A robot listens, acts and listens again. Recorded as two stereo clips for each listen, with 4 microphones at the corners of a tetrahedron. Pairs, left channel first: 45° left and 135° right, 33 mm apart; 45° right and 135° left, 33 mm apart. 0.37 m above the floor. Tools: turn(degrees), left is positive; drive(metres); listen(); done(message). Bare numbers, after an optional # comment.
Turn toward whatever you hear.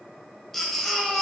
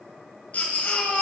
# The baby crying: 35° right.
turn(-35)
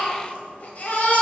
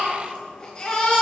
# The baby crying is now 15° left.
turn(15)
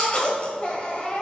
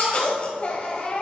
done("Facing the baby crying.")